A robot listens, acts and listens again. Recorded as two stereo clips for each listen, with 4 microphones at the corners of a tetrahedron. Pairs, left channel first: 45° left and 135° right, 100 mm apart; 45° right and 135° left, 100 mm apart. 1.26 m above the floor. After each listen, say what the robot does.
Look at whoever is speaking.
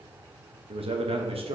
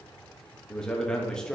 Turn 125° right.
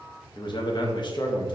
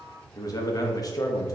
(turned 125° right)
Facing the man speaking, 1 to 2 m away.